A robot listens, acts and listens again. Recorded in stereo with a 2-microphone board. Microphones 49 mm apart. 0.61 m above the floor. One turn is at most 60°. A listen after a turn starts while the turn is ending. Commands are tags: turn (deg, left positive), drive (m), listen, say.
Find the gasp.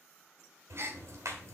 <turn deg="-60"/>
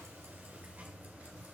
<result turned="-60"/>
<listen/>
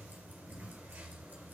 <say>I heard a gasp, but can't make it out now. It was about straight ahead or 60° right.</say>